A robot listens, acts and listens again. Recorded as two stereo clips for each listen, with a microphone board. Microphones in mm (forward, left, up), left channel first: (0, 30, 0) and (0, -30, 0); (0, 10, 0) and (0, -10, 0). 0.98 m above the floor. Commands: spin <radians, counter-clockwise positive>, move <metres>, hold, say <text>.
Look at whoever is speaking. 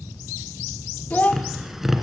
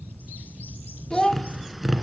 spin 0.52
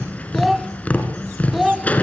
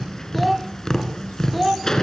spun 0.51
say Found it: a child speaking, straight ahead, under 1 m away.